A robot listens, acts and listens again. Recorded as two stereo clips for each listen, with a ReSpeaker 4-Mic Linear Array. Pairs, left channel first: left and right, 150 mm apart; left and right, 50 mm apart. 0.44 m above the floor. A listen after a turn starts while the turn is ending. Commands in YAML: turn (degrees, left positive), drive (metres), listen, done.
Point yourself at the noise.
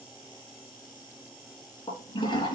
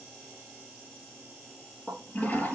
turn: 30
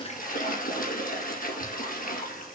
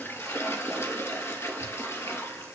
turn: 120
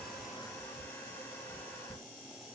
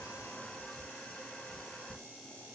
turn: 15
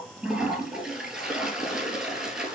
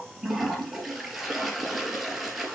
done: "Facing the toilet flushing, 2 to 4 m away."